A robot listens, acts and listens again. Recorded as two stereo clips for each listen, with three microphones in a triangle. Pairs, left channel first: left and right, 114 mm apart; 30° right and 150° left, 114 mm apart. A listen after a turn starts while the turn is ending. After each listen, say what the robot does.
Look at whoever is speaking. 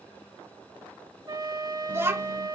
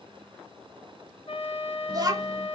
Turn 155° right.
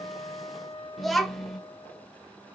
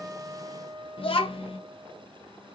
Facing the child speaking, under 1 m away.